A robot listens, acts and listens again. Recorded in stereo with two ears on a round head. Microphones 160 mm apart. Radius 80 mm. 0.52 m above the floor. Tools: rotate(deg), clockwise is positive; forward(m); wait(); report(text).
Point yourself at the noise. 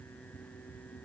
wait()
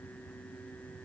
wait()
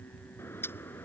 rotate(-30)
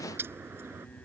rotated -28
rotate(15)
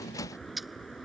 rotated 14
report("Found it: a bird, straight ahead.")